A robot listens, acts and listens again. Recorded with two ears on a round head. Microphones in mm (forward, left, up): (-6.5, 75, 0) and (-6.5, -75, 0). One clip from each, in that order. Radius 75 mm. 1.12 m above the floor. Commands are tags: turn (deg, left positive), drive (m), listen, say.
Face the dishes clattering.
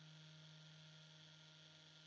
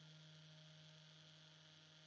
<listen/>
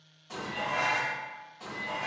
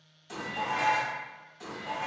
<turn deg="-55"/>
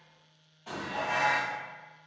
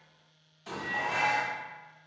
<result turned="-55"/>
<turn deg="-70"/>
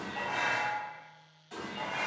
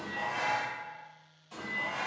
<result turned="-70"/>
<turn deg="20"/>
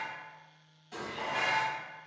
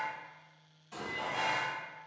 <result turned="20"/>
<say>Found it: dishes clattering, straight ahead, 1 to 2 m away.</say>